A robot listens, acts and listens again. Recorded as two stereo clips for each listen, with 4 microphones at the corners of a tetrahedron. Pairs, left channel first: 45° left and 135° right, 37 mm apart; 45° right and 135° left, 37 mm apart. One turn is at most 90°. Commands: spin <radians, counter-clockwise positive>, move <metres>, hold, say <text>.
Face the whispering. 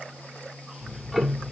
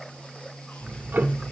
hold
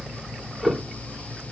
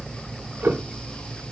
hold
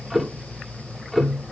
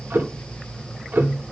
say I can't make out whispering, only ticking.